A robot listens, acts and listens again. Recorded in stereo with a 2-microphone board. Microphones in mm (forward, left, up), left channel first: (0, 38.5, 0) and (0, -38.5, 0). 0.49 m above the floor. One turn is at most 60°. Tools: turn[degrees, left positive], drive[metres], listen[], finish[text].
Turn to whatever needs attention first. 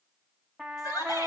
Thought: The shout: about 60° left or 120° left.
Action: turn[60]
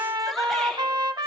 Action: listen[]
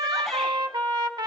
Action: listen[]
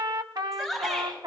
Action: finish[Found it: a shout, straight ahead, over 4 m away.]